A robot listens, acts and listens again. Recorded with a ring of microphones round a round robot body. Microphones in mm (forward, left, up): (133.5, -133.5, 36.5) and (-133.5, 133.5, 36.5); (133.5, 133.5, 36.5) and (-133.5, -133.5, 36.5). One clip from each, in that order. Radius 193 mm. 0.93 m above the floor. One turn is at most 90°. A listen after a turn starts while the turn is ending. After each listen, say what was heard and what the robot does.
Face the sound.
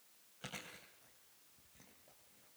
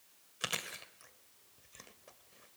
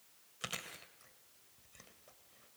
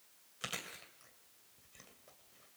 The chewing: 135° left. Turn 90° left.
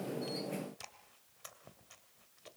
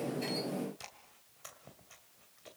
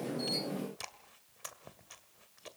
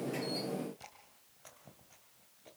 The chewing is now 35° left. Turn 35° left.
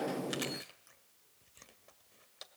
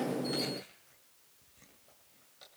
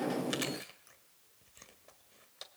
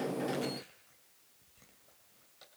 Found it: chewing, straight ahead, 2 to 4 m away.